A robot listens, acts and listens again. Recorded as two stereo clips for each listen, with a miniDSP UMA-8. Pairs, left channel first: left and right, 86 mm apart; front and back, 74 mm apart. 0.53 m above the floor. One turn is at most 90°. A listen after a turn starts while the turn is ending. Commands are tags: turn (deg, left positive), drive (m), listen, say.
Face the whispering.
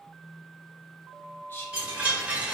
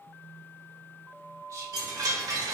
<turn deg="90"/>
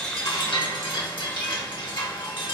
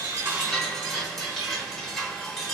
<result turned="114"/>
<turn deg="35"/>
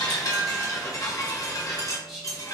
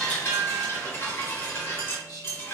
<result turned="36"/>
<say>Found it: whispering, straight ahead.</say>